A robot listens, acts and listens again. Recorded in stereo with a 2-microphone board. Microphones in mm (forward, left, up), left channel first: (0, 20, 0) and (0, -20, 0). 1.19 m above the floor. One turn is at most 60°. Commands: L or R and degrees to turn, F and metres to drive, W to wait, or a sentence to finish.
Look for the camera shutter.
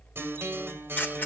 L55
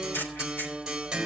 L60
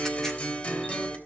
L10
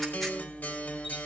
W
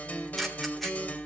Facing the camera shutter.